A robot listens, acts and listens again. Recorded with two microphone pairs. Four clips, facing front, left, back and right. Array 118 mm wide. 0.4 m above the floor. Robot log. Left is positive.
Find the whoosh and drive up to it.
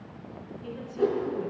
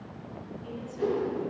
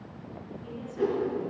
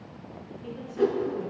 note: The whoosh: 100° right.
cmd yaw -100
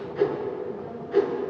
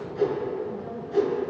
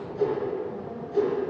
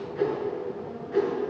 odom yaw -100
cmd fwd 1.0
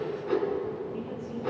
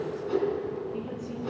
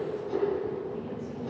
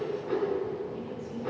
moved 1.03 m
cmd fwd 1.0
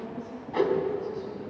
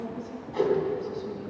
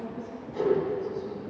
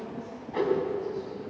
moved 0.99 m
cmd fwd 1.0
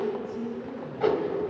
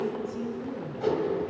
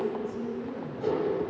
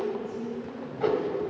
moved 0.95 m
note: The whoosh is now 15° right.
cmd yaw -15
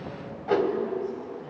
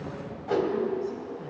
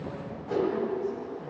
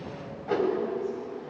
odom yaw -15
cmd fwd 1.0
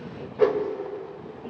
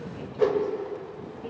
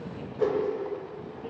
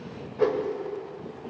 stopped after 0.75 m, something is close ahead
note: The whoosh is now 10° left.
cmd yaw +10
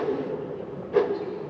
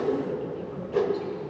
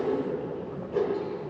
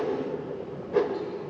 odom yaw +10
end: I am next to the whoosh.